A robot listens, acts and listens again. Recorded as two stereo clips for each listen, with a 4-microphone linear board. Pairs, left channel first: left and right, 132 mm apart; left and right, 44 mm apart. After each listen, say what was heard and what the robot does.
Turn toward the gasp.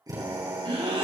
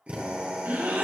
The gasp: about 45° right or 135° right. Turn 45° right.
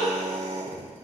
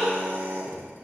Found it: a gasp, straight ahead, 2 to 4 m away.